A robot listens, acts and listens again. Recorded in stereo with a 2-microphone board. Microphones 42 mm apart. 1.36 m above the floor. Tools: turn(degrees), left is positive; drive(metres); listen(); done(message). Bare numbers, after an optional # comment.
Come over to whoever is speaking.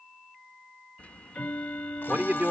# The man speaking: about 50° right or 130° right.
turn(-50)
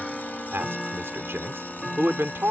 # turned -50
# So it is at 85° right.
turn(-85)
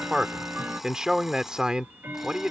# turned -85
# The man speaking is now 15° right.
turn(-15)
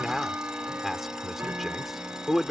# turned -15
drive(1.0)
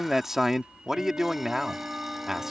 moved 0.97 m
# The man speaking is now 10° right.
turn(-10)
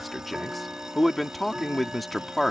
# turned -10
drive(1.0)
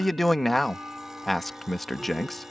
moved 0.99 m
drive(1.0)
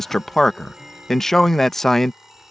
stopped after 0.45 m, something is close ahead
# The man speaking is now 10° left.
turn(10)
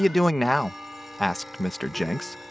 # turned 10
done("I am next to the man speaking.")